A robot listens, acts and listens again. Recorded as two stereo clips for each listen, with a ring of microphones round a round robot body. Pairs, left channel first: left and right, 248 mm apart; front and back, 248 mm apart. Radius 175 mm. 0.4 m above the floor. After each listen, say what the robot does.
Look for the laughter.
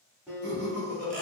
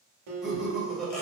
Turn 90° right.
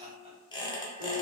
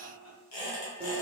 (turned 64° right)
Turn 30° right.
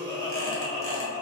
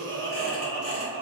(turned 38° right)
Turn 10° left.
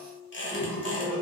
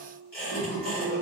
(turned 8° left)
Facing the laughter.